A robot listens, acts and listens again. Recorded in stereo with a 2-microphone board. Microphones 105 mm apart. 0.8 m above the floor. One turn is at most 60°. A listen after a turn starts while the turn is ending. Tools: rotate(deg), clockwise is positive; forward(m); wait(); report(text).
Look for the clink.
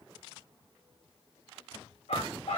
wait()
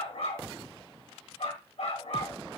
wait()
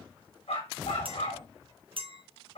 rotate(55)
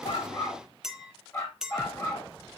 report("Facing the clink.")